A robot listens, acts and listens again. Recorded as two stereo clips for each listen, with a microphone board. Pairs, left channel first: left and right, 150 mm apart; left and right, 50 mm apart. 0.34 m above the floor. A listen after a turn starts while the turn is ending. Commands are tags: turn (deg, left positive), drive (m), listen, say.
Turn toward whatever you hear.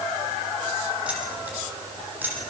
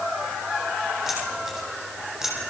<turn deg="-30"/>
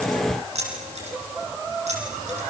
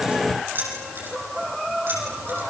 <turn deg="-130"/>
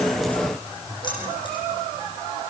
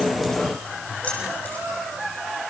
<listen/>
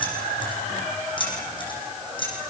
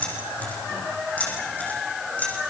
<turn deg="35"/>
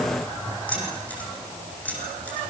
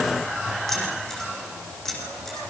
<turn deg="10"/>
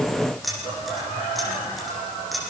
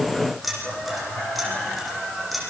<say>Found it: keys jangling, straight ahead.</say>